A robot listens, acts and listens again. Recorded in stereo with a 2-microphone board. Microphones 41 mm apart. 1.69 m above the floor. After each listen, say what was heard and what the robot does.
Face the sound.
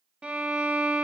The violin: about 30° right or 150° right. Turn 30° right.
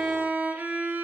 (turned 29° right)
So it is at 120° right. Turn 120° right.
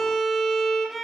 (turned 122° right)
Found it: a violin, straight ahead, 1 to 2 m away.